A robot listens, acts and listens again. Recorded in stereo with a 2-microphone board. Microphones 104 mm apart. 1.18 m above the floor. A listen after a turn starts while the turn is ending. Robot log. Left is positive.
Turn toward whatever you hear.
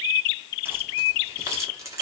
note: The keys jangling: about 30° right or 150° right.
cmd yaw -30
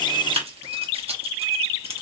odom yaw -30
note: So it is at 105° right.
cmd yaw -105
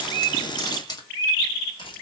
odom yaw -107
note: The keys jangling is now 40° left.
cmd yaw +40
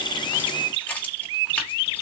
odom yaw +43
note: The keys jangling is now 15° left.
cmd yaw +15
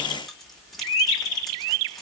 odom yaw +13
end: Facing the keys jangling, 1 to 2 m away.